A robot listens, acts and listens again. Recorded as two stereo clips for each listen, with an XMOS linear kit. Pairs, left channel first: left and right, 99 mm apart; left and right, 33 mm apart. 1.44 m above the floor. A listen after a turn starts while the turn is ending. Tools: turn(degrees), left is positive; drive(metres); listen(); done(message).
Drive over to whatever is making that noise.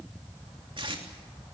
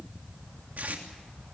turn(degrees=-60)
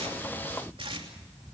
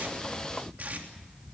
listen()
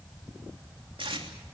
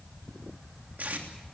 turn(degrees=-60)
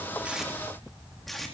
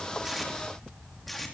drive(metres=1.0)
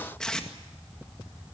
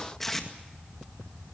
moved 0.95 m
drive(metres=1.0)
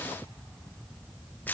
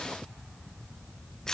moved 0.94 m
turn(degrees=20)
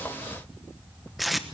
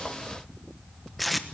drive(metres=1.0)
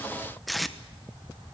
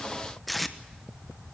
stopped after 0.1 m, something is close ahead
done("Arrived at the tape being pulled, straight ahead.")